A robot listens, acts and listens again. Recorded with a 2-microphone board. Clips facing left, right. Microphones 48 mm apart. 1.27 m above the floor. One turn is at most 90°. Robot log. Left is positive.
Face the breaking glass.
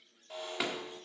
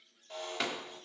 cmd yaw +30
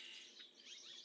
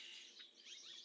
cmd idle
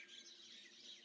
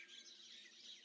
end: I heard breaking glass, but can't make it out now. It was about 25° right or 145° left.